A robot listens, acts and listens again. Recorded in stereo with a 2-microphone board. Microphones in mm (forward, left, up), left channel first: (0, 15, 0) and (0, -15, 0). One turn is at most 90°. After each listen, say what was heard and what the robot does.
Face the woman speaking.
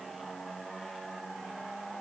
Keep listening.
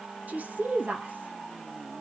Turn 90° right.
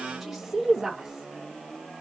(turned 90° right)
So it is at 15° right. Turn 15° right.
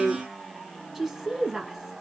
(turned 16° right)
Found it: a woman speaking, straight ahead.